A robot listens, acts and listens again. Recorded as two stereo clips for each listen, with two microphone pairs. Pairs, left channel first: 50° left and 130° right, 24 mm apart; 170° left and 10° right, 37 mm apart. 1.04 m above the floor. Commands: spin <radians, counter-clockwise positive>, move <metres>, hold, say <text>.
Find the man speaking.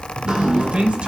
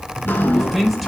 spin -1.83
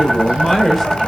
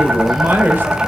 spin -0.52
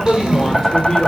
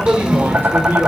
spin -0.35
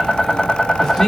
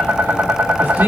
spin -0.26
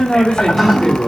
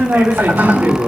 spin -0.26
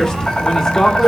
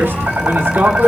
spin -0.17
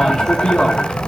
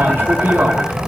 say Found it: a man speaking, straight ahead, 2 to 4 m away.